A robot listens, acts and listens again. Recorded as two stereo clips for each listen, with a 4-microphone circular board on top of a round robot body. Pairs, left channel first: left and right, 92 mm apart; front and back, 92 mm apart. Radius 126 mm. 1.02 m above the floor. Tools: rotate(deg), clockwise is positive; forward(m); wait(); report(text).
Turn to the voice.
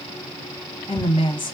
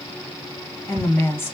rotate(-70)
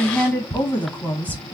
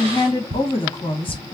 rotate(-20)
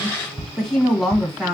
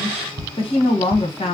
report("Found it: a woman speaking, straight ahead.")